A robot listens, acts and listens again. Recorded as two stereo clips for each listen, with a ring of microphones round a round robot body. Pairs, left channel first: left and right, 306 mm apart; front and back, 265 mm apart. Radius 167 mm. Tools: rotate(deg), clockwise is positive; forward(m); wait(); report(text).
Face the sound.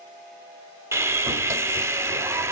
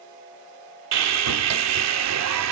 rotate(170)
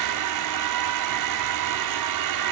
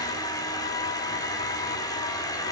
rotate(75)
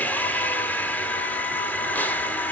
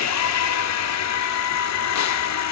report("Facing the sawing, 1 to 2 m away.")